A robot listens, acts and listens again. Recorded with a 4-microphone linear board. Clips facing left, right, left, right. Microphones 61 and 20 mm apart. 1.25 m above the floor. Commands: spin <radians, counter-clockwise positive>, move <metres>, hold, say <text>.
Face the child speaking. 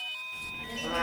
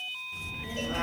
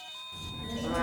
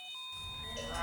spin -0.52
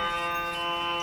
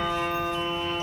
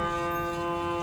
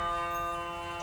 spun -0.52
spin -2.53
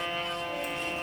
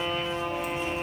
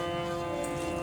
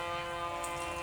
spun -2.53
say Facing the child speaking, 1 to 2 m away.